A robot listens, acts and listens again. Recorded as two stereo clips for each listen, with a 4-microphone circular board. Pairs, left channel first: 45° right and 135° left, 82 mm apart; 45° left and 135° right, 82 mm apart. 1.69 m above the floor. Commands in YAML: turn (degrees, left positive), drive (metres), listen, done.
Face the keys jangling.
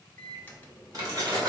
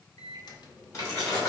turn: 90
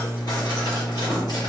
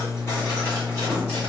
listen: true
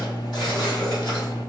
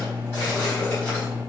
listen: true
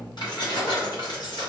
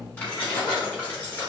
turn: -20
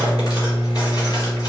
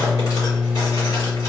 listen: true
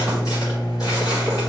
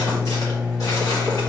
listen: true
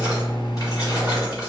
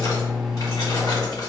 done: "I heard keys jangling from this way, but can't make it out now."